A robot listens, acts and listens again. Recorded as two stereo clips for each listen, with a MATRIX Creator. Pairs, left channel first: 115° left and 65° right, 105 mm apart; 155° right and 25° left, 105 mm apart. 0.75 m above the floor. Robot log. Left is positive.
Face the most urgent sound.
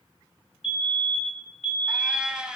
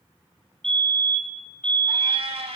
note: The fire alarm: 120° left.
cmd yaw +120
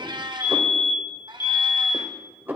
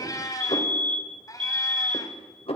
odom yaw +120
end: Found it: a fire alarm, straight ahead.